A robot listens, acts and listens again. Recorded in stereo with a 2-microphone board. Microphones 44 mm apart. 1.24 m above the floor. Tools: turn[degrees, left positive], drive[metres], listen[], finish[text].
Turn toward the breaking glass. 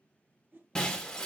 Action: turn[30]
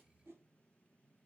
Action: listen[]
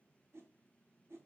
Action: finish[I heard breaking glass, but can't make it out now. It was about 15° right or 135° left.]